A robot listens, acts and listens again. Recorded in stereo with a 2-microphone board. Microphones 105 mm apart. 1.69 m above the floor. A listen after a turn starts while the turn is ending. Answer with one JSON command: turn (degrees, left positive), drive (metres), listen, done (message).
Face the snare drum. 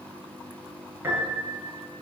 {"listen": true}
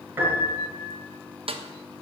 {"turn": -60}
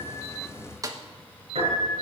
{"turn": -40}
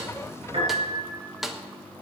{"done": "Facing the snare drum, 1 to 2 m away."}